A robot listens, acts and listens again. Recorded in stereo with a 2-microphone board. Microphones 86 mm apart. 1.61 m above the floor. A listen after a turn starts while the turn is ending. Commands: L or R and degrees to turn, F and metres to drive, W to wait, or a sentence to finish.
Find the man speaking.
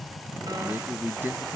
R25
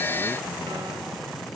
W
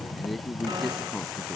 Found it: a man speaking, straight ahead.